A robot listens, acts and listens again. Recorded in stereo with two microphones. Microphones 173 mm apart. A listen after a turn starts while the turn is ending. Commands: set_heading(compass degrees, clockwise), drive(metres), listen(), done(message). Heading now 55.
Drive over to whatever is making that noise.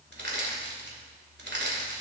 set_heading(145)
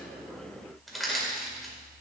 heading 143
drive(1.0)
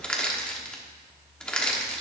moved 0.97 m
drive(1.0)
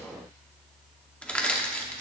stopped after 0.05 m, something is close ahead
done("Arrived at the crushing, straight ahead.")